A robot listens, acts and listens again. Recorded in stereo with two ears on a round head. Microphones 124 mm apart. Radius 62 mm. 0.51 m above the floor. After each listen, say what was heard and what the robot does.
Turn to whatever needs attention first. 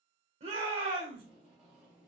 The shout: about 40° right or 140° right. Turn 40° right.
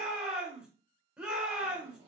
So it is at 10° right. Turn 10° right.
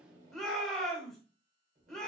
Found it: a shout, straight ahead, 1 to 2 m away.